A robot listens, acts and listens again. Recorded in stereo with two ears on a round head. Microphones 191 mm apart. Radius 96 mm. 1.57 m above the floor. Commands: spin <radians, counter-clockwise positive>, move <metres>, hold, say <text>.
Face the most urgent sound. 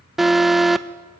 spin 0.52
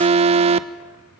spin -0.61
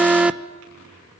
say Found it: an alarm, straight ahead, under 1 m away.